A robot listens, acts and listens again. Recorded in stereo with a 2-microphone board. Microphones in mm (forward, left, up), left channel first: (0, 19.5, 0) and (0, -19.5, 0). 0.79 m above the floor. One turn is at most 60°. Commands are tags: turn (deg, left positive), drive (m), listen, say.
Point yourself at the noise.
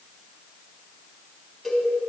<turn deg="30"/>
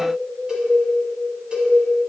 <turn deg="-25"/>
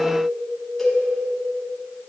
<turn deg="10"/>
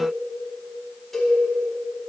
<say>Facing the cowbell, over 4 m away.</say>